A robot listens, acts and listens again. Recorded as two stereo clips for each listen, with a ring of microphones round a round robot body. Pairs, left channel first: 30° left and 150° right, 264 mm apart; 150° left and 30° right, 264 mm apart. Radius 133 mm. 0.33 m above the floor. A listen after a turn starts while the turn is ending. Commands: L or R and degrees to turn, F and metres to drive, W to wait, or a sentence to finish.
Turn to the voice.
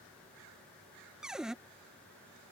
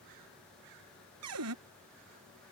W
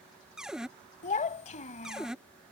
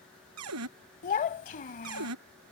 L90
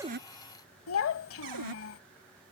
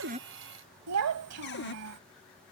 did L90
Facing the child speaking.